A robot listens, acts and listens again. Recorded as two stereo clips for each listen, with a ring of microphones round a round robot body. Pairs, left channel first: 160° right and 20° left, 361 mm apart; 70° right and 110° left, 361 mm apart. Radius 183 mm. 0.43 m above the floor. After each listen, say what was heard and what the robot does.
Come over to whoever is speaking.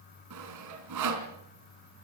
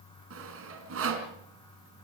Keep listening.
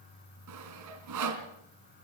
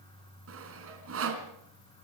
Keep listening.
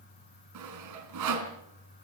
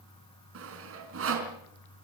I can't make out anyone speaking to turn to.